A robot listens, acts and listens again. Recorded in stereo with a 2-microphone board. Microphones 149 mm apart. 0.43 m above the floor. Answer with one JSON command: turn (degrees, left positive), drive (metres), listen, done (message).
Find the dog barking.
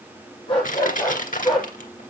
{"turn": 30}
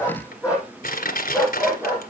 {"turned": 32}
{"turn": -15}
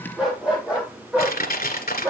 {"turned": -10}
{"turn": -10}
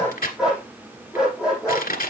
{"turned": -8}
{"done": "Found it: a dog barking, straight ahead, over 4 m away."}